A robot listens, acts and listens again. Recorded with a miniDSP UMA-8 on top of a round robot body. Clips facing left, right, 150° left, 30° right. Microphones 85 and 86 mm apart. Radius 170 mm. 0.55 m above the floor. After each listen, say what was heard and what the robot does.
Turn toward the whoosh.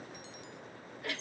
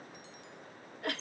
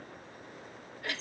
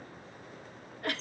Keep listening.
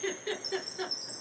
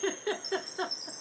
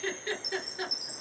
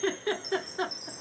Keep listening.
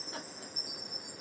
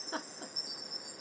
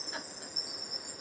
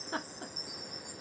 I can't make out a whoosh to turn to.